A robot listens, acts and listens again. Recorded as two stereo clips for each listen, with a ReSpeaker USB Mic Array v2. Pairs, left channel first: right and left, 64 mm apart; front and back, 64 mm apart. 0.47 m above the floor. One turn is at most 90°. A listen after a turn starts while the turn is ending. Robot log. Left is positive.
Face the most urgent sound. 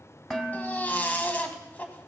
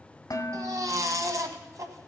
note: The baby crying: 155° right.
cmd yaw -90
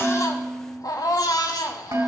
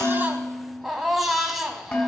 note: The baby crying is now 95° right.
cmd yaw -90
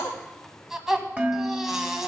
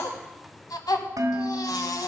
end: Facing the baby crying.